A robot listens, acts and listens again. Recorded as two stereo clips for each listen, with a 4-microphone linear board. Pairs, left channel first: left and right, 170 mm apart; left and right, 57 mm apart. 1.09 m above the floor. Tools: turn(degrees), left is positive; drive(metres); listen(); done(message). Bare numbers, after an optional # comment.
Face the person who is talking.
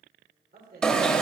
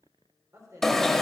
# The woman speaking: about 70° right or 110° right.
turn(-70)
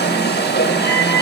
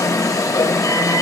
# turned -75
listen()
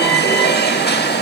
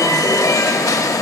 listen()
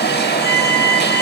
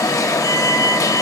done("I heard a woman speaking, but can't make it out now. It was about 5° left or 35° right.")